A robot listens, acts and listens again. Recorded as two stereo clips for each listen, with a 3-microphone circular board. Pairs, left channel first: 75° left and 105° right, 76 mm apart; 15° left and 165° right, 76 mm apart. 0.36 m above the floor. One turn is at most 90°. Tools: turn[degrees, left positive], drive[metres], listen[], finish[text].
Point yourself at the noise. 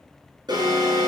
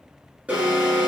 Thought: The alarm: 95° right.
Action: turn[-90]
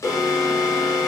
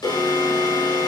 Thought: The alarm is now 30° left.
Action: turn[30]
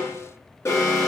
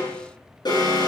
Thought: The alarm is now 25° left.
Action: turn[25]
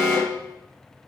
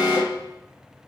Thought: The alarm is now 15° right.
Action: turn[-15]
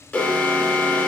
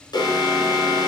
Action: finish[Found it: an alarm, straight ahead, over 4 m away.]